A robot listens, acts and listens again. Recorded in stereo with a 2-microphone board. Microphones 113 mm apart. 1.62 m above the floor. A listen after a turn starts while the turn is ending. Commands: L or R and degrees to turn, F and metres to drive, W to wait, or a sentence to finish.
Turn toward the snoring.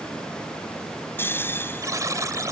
L20
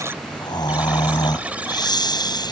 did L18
L145
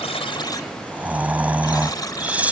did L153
R10
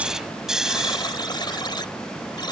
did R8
Found it: snoring, straight ahead.